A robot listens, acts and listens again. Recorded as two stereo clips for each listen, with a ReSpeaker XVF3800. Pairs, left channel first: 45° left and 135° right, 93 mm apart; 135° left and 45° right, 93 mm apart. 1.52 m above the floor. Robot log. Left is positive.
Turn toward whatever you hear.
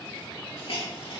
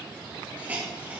note: The hiss: 25° left.
cmd yaw +25
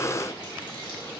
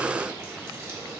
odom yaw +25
cmd idle
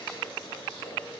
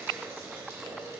note: The hiss is now 15° left.
cmd yaw +15
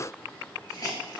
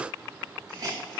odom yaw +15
end: Facing the hiss.